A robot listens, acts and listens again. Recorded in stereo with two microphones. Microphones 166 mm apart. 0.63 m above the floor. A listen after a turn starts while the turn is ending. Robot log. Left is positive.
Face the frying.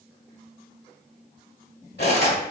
cmd idle
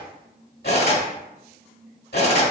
cmd idle
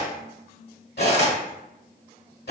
end: I can't make out frying, only cutlery clinking.